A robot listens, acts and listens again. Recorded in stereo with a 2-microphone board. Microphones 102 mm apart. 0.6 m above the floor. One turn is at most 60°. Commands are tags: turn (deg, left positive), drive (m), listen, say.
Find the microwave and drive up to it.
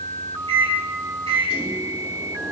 <turn deg="-60"/>
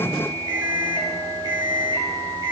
<turn deg="-50"/>
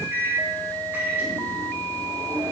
<turn deg="-20"/>
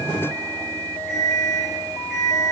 <drive m="1.0"/>
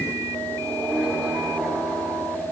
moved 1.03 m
<turn deg="-10"/>
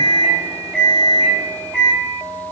<drive m="1.0"/>
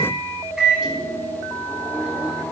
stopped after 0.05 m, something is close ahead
<say>Arrived at the microwave, straight ahead.</say>